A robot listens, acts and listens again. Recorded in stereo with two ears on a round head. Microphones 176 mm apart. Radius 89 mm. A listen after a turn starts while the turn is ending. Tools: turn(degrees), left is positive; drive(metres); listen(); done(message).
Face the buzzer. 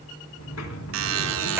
turn(degrees=-75)
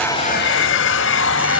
listen()
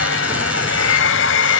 listen()
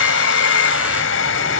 done("I heard a buzzer, but can't make it out now. It was about straight ahead or 30° right.")